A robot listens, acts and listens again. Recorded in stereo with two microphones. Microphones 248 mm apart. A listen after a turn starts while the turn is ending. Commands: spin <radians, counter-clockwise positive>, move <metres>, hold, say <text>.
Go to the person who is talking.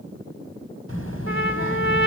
spin 1.05
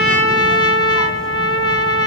hold
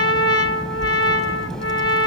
move 1.0
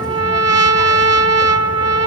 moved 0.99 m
hold
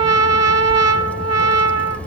move 1.0
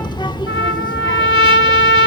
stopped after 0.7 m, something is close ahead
spin 0.26
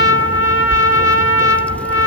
say Arrived at the child speaking, straight ahead.